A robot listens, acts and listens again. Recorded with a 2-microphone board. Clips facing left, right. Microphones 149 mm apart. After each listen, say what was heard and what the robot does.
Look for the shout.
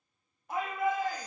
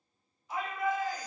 The shout: about 55° left or 125° left. Turn 55° left.
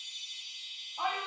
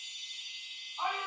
So it is at 70° left. Turn 70° left.
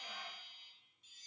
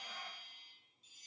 Keep listening.
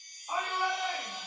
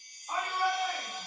The shout is now 10° left. Turn 10° left.
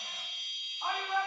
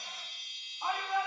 Found it: a shout, straight ahead.